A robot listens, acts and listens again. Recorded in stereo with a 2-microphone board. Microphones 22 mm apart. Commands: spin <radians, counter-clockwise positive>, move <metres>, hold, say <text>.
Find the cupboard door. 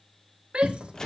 spin -0.44
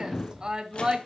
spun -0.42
spin -2.27
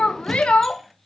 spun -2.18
say Found it: a cupboard door, straight ahead, 1 to 2 m away.